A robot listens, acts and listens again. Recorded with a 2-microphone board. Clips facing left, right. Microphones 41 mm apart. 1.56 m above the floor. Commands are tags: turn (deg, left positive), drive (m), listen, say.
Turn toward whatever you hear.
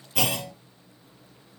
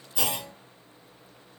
<turn deg="65"/>
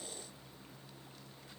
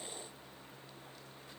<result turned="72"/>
<listen/>
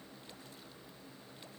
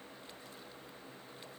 <say>I heard a clunk, but can't make it out now. It was about 10° right or 45° left.</say>